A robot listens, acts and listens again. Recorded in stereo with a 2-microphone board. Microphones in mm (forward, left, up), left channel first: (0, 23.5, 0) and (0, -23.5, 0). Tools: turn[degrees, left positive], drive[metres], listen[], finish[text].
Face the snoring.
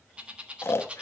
Thought: The snoring: about 60° left or 120° left.
Action: turn[60]
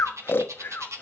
Thought: So it is at 55° left.
Action: turn[55]
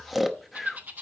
Action: finish[Found it: snoring, straight ahead, under 1 m away.]